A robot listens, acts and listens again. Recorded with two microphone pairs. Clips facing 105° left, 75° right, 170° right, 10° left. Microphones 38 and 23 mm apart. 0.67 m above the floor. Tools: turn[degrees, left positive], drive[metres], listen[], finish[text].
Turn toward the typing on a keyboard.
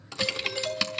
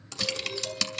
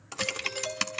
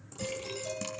Thought: The typing on a keyboard: straight behind.
Action: turn[180]
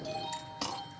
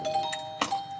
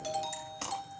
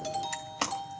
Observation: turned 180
Thought: The typing on a keyboard is now 40° right.
Action: turn[-40]
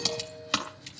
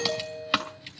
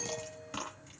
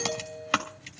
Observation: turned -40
Action: finish[Found it: typing on a keyboard, straight ahead, 2 to 4 m away.]